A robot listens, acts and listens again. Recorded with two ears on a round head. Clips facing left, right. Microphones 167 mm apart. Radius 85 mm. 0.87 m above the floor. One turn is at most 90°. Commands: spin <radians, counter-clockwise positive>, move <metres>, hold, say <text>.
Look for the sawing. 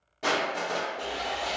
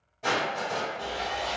spin 0.52
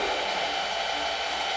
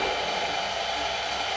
say Found it: sawing, straight ahead, 1 to 2 m away.